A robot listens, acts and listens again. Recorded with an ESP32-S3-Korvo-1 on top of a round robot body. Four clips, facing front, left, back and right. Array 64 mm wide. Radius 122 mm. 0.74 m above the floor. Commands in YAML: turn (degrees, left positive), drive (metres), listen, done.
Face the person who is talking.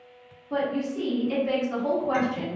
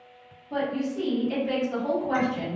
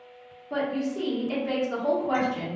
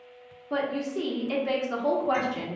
turn: -95
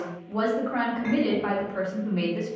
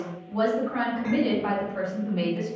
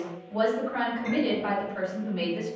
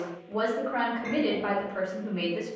turn: -40
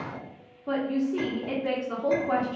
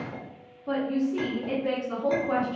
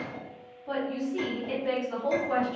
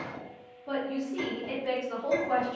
done: "Facing the woman speaking."